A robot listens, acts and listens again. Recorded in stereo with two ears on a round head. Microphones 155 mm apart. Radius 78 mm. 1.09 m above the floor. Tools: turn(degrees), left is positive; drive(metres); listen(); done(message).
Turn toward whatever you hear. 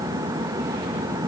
listen()
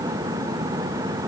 listen()
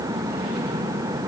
done("I can't make out anything.")